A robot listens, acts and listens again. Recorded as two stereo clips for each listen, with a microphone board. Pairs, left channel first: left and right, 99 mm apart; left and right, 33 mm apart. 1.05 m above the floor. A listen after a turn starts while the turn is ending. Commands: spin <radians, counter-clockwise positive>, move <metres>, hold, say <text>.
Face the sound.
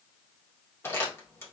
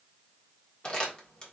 spin 0.44
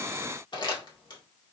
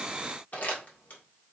spin 2.18
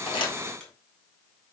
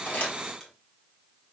hold
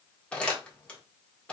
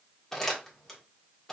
spin 0.17
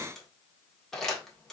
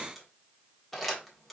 say Found it: crumpling, straight ahead, 1 to 2 m away.